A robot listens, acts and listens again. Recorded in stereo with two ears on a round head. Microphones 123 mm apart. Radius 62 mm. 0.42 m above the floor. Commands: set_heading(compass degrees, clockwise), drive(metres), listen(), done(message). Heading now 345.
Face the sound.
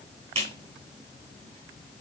set_heading(30)
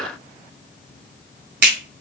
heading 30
set_heading(120)
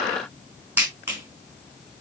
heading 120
set_heading(135)
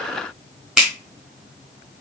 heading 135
done("Facing the clap, 2 to 4 m away.")